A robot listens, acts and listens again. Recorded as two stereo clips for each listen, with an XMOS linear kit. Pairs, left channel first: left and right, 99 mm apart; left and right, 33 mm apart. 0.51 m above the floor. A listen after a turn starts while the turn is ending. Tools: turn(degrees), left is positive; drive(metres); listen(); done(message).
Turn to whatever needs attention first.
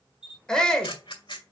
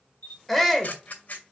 turn(degrees=30)
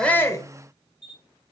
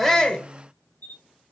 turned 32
listen()
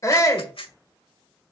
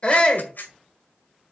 turn(degrees=140)
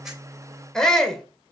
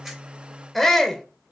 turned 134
done("Facing the shout.")